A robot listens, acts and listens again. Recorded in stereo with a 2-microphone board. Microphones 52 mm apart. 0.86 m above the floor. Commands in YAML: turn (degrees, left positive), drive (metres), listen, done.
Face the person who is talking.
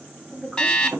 turn: 30
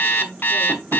turn: -25
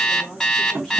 listen: true
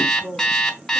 turn: 10
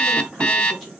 listen: true
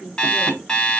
done: "Facing the woman speaking."